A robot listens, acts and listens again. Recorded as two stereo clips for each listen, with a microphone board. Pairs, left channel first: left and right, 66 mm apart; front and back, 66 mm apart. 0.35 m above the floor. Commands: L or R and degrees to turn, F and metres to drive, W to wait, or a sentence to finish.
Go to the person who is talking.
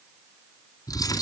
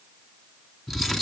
W
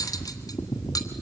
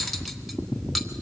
W
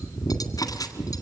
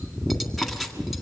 I can't make out anyone speaking, only cutlery clinking.